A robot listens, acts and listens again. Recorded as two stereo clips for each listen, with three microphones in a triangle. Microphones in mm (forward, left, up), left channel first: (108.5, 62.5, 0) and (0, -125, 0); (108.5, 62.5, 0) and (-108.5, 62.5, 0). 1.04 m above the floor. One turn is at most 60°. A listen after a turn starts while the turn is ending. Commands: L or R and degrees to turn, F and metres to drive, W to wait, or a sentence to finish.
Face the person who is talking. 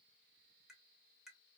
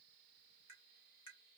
W
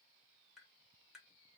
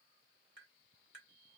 W
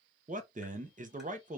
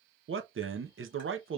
R60
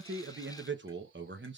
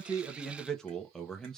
R60
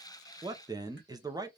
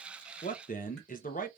R45
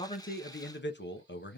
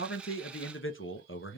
L25
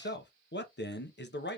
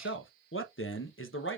L20
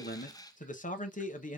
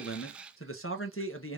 Found it: a man speaking, straight ahead.